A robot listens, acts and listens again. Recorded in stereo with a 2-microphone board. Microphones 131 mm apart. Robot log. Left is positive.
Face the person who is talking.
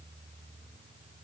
cmd idle
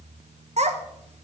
note: The child speaking: about 55° right or 125° right.
cmd yaw -55
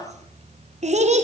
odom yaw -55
note: So it is at 65° right.
cmd yaw -65
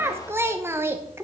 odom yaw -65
note: The child speaking is now 20° right.
cmd yaw -20
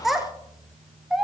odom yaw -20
end: Facing the child speaking.